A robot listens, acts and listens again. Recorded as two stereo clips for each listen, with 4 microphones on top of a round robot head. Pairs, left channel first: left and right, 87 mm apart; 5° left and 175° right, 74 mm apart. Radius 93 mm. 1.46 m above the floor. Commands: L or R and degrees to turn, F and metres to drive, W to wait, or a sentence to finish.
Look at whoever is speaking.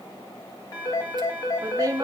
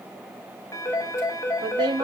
R155
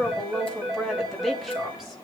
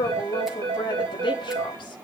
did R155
Facing the woman speaking, 2 to 4 m away.